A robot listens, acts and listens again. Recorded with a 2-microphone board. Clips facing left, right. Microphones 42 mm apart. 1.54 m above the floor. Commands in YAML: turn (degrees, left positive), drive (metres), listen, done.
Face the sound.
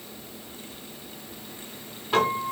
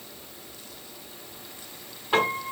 turn: -20
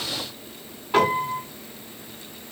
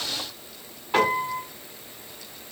done: "Found it: a piano, straight ahead, 2 to 4 m away."